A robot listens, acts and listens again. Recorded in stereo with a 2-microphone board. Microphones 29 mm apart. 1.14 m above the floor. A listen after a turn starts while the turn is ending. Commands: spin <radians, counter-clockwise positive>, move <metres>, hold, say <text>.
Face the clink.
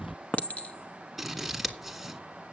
spin 1.13
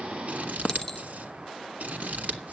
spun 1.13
spin 0.52
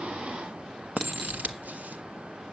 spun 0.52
say Found it: a clink, straight ahead.